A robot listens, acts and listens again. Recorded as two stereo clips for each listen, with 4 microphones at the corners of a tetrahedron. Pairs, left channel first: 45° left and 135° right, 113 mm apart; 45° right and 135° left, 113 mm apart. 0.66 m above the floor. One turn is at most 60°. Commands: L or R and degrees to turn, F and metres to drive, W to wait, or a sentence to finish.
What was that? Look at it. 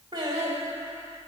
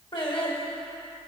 R60
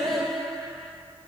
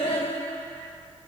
R40
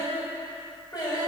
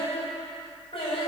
R10
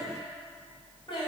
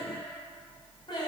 Facing the singing.